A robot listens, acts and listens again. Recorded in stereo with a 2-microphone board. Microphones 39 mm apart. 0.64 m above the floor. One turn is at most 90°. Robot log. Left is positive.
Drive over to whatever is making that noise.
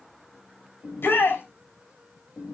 note: The shout: about 70° left or 110° left.
cmd yaw +70
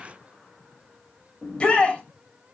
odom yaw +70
note: So it is at 30° left.
cmd yaw +30
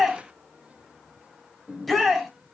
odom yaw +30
cmd fwd 1.0
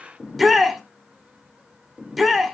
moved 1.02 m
cmd fwd 1.0
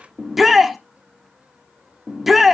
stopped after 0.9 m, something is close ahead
end: I am next to the shout.